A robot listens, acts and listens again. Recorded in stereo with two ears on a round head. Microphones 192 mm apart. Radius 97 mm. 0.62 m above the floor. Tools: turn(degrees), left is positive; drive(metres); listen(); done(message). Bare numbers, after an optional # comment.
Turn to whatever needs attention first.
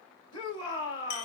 # The shout: about 20° left or 160° left.
turn(20)
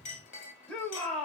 done("Facing the shout, 2 to 4 m away.")